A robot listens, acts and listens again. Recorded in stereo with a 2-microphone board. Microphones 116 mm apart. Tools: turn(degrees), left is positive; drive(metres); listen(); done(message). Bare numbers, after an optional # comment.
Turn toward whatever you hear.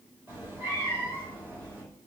# The cat meowing: about 20° right or 160° right.
turn(-20)
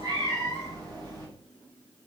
# So it is at 140° right.
turn(-140)
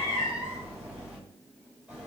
# The cat meowing is now 10° right.
turn(-10)
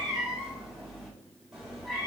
done("Found it: a cat meowing, straight ahead, 2 to 4 m away.")